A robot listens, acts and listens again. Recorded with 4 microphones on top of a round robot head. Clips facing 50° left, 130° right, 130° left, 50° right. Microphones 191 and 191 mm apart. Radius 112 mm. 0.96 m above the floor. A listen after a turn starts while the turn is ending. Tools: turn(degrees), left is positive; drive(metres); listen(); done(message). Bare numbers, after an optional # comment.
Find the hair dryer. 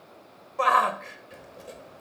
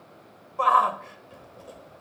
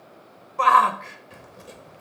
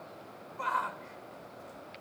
listen()
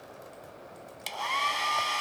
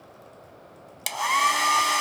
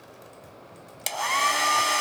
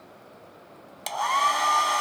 # The hair dryer: 165° right.
turn(-165)
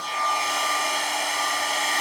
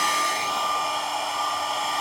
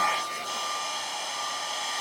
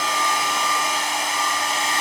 # The hair dryer is now 25° right.
turn(-25)
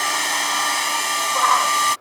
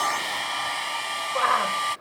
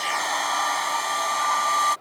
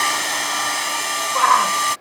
# The hair dryer is now 10° left.
turn(10)
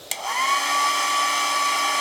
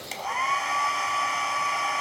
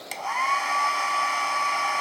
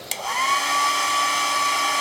done("Facing the hair dryer.")